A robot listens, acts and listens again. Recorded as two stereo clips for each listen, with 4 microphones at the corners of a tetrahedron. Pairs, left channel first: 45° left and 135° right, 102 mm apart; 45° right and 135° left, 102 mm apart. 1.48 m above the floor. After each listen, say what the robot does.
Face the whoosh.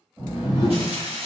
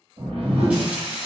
Turn 165° left.
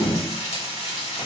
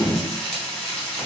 Turn 10° right.
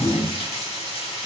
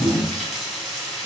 Found it: a whoosh, straight ahead.